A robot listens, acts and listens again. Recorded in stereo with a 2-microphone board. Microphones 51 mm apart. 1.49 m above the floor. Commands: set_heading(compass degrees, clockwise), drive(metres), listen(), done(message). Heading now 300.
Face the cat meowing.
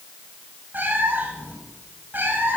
set_heading(340)
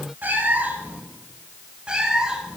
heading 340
set_heading(355)
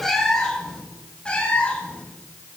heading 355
set_heading(335)
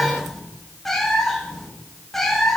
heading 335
done("Found it: a cat meowing, straight ahead.")